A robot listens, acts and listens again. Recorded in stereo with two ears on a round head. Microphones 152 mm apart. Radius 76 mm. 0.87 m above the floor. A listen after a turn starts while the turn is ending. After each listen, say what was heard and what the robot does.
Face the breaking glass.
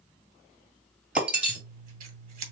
Turn 30° right.
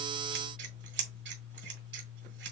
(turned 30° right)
Keep listening.
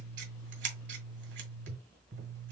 I heard breaking glass, but can't make it out now. It was about 20° left or 140° right.